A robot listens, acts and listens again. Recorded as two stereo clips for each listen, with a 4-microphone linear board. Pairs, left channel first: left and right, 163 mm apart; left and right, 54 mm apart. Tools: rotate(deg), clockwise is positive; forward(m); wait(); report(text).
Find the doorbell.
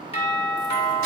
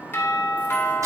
rotate(-40)
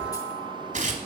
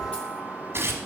wait()
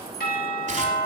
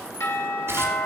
rotate(-95)
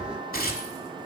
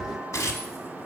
wait()
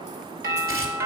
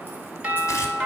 rotate(20)
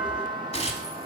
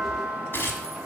report("Facing the doorbell.")